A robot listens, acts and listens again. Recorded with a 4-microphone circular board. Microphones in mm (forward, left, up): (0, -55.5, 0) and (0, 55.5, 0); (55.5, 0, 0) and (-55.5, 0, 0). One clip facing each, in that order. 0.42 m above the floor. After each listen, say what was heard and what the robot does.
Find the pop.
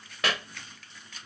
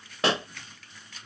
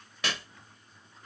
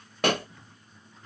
The pop: 150° left. Turn 150° left.
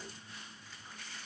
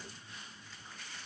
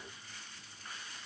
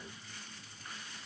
Facing where the pop came from. I can't hear it now.